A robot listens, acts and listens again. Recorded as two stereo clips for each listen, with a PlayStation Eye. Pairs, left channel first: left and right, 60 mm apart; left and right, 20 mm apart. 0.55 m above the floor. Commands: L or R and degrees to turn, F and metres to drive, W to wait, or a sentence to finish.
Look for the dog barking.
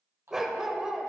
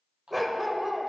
R30
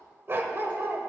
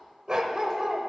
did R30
R140
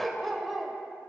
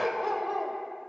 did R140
Facing the dog barking.